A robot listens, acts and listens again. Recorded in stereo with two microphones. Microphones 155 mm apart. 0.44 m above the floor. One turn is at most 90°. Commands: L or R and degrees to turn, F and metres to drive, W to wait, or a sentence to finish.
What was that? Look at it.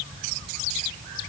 W
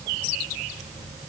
W
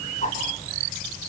L55
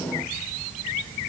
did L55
W
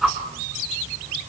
Facing the whoosh, 2 to 4 m away.